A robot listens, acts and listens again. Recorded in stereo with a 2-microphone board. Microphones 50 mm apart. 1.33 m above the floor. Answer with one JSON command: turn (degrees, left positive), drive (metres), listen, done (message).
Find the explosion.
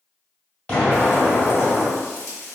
{"turn": 25}
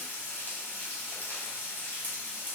{"listen": true}
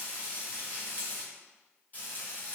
{"done": "I heard an explosion, but can't make it out now. It was about straight ahead or 130° left."}